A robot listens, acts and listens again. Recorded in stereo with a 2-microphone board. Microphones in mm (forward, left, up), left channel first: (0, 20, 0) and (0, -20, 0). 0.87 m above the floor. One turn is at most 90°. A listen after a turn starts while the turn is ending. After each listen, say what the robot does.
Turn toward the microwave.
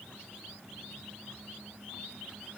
Keep listening.
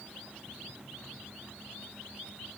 Keep listening.
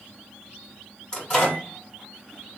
Turn 20° left.
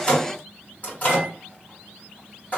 Turn 90° left.
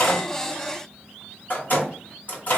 Turn 50° left.
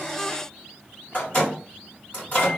Turn 35° left.
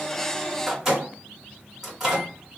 Turn 10° right.
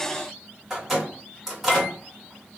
Facing the microwave, 1 to 2 m away.